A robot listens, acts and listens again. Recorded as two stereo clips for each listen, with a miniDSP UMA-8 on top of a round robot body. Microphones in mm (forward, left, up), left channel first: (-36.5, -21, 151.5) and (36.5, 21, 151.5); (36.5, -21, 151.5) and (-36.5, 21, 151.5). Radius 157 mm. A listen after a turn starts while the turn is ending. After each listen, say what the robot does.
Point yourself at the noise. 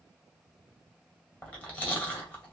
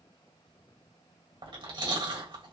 Turn 140° left.
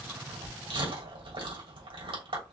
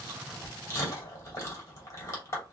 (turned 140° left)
Turn 25° left.
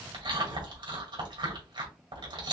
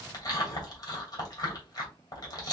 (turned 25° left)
Turn 15° left.
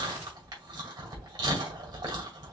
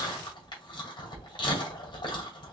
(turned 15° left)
Facing the chewing.